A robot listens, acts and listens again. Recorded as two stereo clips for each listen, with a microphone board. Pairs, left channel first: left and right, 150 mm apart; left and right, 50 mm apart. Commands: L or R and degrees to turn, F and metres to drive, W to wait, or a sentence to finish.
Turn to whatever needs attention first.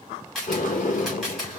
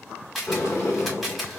W
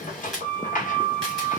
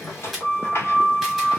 W
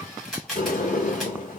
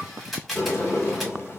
I can't make out anything urgent to turn to.